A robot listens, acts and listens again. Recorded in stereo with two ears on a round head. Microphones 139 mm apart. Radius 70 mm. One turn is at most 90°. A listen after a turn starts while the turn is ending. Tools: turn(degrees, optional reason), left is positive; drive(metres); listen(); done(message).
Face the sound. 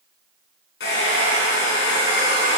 turn(degrees=90)
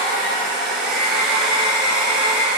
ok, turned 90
done("Facing the hair dryer, 2 to 4 m away.")